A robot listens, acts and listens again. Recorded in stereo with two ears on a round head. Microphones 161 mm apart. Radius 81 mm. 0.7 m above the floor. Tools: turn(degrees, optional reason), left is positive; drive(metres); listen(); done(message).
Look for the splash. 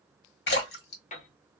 turn(degrees=65, reason="The splash: about 65° left or 115° left.")
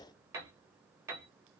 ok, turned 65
listen()
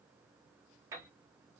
done("I heard a splash, but can't make it out now. It was about straight ahead or 50° left.")